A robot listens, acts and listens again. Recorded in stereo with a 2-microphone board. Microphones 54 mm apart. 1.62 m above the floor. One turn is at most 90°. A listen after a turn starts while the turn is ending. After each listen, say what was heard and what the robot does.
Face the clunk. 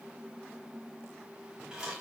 Keep listening.
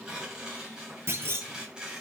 The clunk: about 50° right or 130° right. Turn 50° right.
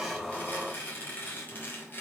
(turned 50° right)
Keep listening.
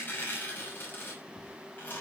I heard a clunk, but can't make it out now. It was about straight ahead or 80° right.